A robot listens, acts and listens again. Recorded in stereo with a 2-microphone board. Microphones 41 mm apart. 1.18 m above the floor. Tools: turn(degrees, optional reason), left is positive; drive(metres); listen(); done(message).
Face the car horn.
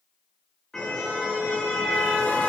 turn(degrees=15, reason="The car horn: about 15° left or 165° left.")
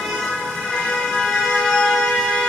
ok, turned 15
done("Found it: a car horn, straight ahead.")